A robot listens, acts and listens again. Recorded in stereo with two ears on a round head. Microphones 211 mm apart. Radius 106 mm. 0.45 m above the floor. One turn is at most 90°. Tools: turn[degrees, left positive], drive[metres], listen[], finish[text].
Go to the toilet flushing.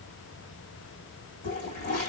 Thought: The toilet flushing: about 30° left or 150° left.
Action: turn[30]
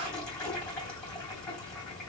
Action: drive[1.0]
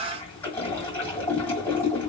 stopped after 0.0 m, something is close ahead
Thought: The toilet flushing is now 10° left.
Action: turn[10]
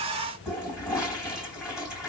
Action: finish[Blocked. The toilet flushing is further on, straight ahead.]